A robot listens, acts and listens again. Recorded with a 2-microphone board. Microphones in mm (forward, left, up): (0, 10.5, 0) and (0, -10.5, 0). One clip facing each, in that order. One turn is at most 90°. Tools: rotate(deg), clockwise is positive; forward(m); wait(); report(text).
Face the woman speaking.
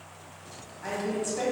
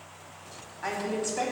rotate(30)
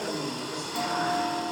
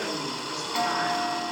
rotate(90)
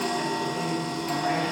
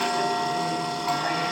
rotate(40)
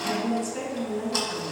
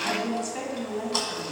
rotate(20)
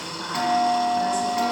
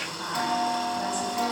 report("Found it: a woman speaking, straight ahead, 2 to 4 m away.")